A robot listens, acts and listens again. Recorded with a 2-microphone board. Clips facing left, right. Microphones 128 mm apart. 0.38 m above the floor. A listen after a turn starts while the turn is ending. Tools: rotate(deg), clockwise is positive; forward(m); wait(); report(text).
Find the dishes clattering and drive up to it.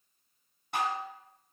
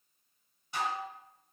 rotate(-60)
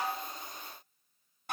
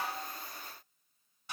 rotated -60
rotate(-60)
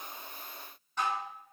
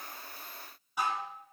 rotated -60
rotate(10)
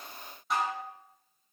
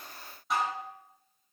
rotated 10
forward(1.0)
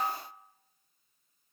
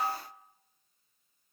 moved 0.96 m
forward(1.0)
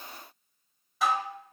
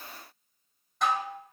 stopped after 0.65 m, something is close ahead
report("I am next to the dishes clattering.")